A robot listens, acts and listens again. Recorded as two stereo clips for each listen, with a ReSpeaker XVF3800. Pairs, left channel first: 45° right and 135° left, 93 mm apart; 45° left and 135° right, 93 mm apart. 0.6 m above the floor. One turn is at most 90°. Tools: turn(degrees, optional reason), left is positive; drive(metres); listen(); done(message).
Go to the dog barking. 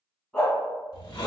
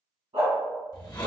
turn(degrees=-90, reason="The dog barking: 125° right.")
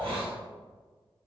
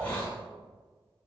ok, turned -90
turn(degrees=-35, reason="Nothing new. It was at 35° right.")
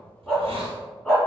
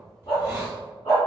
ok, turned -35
turn(degrees=30, reason="The dog barking is now 30° left.")
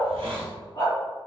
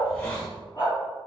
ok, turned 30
turn(degrees=-10, reason="The dog barking is now 10° right.")
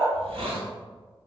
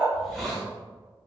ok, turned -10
drive(metres=1.0)
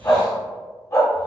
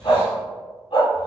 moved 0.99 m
turn(degrees=10, reason="The dog barking is now 10° left.")
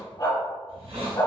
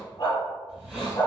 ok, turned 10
drive(metres=1.0)
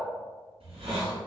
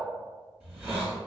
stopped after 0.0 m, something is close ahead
listen()
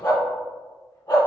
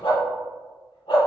done("I am next to the dog barking.")